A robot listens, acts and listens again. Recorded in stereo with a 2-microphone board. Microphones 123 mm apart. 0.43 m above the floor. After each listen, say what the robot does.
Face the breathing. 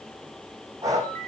Turn 25° right.
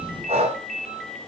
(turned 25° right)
Turn 130° right.
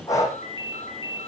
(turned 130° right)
Turn 25° left.
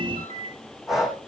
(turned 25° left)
Facing the breathing, over 4 m away.